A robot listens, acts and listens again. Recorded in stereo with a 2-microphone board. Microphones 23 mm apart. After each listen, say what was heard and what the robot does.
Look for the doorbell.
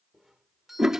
Turn 30° right.
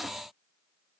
Keep listening.
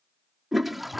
Keep listening.
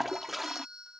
So it is at 140° right. Turn 140° right.
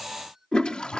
The doorbell is now 20° right. Turn 20° right.
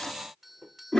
Facing the doorbell.